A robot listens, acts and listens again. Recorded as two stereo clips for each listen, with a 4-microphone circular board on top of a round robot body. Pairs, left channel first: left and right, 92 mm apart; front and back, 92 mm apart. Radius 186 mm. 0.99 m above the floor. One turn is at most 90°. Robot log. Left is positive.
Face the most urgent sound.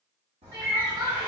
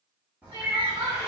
note: The crying: 140° right.
cmd yaw -90
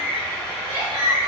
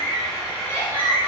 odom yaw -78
note: The crying is now 65° right.
cmd yaw -65
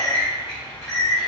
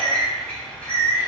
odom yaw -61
cmd idle
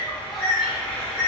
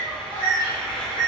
cmd idle
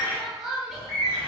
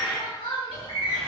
end: Facing the crying, 1 to 2 m away.